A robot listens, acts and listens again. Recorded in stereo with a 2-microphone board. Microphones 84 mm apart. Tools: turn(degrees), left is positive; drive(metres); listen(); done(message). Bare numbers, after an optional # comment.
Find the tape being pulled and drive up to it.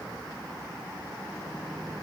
listen()
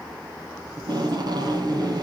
# The tape being pulled: about 55° right or 125° right.
turn(-55)
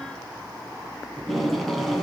drive(1.0)
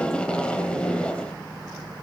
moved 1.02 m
# The tape being pulled is now 15° left.
turn(15)
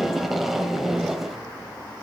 drive(1.0)
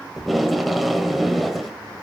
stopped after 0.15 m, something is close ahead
done("Arrived at the tape being pulled, straight ahead.")